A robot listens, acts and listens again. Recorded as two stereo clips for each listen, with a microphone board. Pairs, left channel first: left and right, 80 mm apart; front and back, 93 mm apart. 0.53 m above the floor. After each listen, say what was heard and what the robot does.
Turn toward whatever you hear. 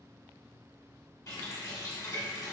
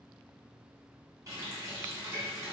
The running tap: 130° left. Turn 130° left.
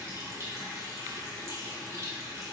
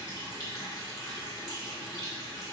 The running tap is now 40° right. Turn 40° right.
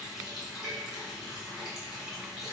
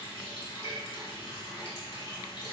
Facing the running tap.